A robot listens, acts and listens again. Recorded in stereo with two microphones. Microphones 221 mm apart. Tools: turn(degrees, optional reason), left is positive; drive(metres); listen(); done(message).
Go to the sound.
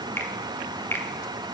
turn(degrees=30)
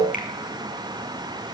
listen()
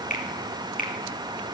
turn(degrees=140, reason="So it is at 140° left.")
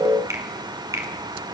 turn(degrees=-15, reason="The finger snap is now 15° right.")
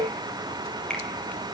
drive(metres=1.0)
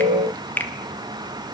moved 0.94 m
turn(degrees=10, reason="The finger snap is now 10° left.")
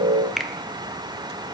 drive(metres=1.0)
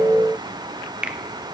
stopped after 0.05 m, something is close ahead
done("I am next to the finger snap.")